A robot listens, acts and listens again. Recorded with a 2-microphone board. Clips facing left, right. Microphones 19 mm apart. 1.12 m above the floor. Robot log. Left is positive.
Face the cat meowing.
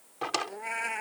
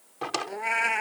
note: The cat meowing: about 35° right or 145° right.
cmd yaw -35
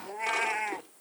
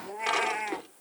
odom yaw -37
end: Facing the cat meowing.